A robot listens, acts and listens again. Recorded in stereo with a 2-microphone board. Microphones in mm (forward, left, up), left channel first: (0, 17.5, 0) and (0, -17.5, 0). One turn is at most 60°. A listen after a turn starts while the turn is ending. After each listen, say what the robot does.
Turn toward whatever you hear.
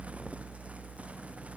Keep listening.
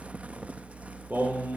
Turn 60° right.
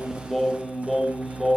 Facing the singing.